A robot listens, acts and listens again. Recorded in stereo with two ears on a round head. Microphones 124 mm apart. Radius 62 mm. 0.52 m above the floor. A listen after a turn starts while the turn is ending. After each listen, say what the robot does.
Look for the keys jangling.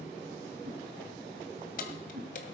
Turn 60° left.
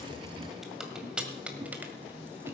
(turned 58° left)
Turn 10° right.
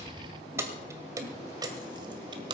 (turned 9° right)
Turn 35° right.
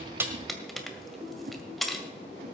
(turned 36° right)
Found it: keys jangling, straight ahead.